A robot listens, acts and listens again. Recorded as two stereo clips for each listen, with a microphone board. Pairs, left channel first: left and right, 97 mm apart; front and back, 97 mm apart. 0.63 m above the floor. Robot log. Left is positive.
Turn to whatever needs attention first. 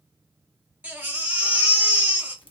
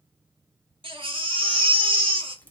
note: The baby crying: 160° right.
cmd yaw -160
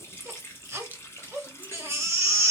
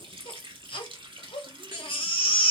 note: The baby crying is now 30° right.
cmd yaw -30
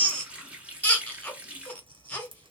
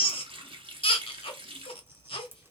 note: The baby crying is now 15° left.
cmd yaw +15
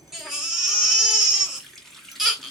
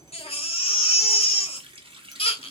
end: Facing the baby crying, 1 to 2 m away.